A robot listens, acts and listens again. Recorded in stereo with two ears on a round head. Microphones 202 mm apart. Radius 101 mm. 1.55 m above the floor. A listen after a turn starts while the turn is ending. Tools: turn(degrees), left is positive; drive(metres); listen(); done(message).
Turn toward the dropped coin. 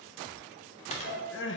turn(degrees=30)
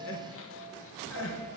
listen()
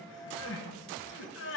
done("I heard a dropped coin, but can't make it out now. It was about straight ahead or 120° left.")